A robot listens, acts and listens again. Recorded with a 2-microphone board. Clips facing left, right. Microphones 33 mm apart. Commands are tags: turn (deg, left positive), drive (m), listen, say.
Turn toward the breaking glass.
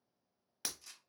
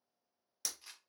<turn deg="35"/>
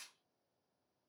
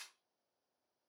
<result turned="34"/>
<listen/>
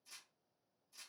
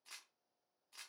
<say>I heard breaking glass, but can't make it out now. It was about straight ahead or 110° left.</say>